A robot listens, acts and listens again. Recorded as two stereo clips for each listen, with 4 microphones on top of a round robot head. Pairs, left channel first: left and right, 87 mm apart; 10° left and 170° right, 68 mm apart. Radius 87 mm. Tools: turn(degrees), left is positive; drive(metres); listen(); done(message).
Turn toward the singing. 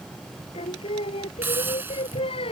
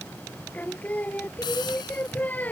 turn(degrees=75)
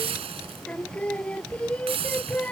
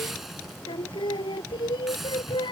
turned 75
turn(degrees=15)
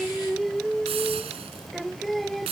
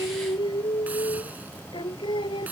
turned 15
done("Found it: singing, straight ahead.")